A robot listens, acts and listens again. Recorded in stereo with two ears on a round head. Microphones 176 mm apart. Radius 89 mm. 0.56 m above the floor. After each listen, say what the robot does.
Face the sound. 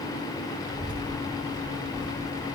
Turn 40° right.
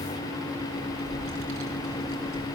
Turn 105° right.
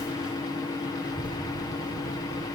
Turn 10° right.
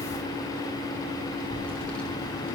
Facing the child speaking.